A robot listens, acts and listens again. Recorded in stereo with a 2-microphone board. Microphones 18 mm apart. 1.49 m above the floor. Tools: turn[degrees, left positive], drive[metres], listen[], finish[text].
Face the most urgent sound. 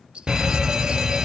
Thought: The fire alarm: about 35° right or 145° right.
Action: turn[-35]
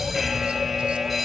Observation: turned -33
Action: finish[Facing the fire alarm, 1 to 2 m away.]